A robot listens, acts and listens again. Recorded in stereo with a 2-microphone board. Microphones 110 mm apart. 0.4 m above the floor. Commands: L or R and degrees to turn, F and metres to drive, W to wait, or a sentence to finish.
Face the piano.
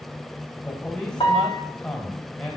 L50
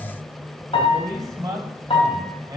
L75
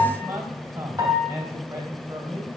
R35
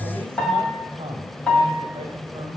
L10
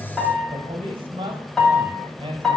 Found it: a piano, straight ahead.